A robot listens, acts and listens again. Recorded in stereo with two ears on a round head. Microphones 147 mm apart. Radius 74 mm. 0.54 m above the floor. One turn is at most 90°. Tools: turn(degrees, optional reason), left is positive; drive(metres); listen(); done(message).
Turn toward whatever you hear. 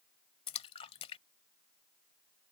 turn(degrees=35, reason="The splash: about 35° left or 145° left.")
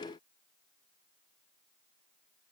listen()
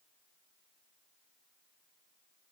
done("I heard a splash, but can't make it out now. It was about straight ahead or 110° left.")